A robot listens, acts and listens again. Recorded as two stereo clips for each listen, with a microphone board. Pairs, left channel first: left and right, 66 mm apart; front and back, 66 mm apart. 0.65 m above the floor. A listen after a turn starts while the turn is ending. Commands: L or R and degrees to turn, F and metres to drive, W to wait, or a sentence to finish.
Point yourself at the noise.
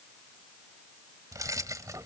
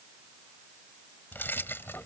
R55
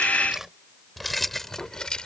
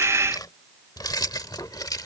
L15
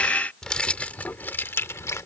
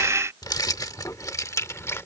L45
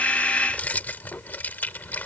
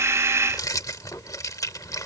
L25
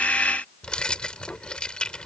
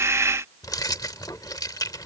L15
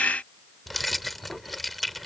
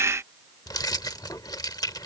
Found it: keys jangling, straight ahead.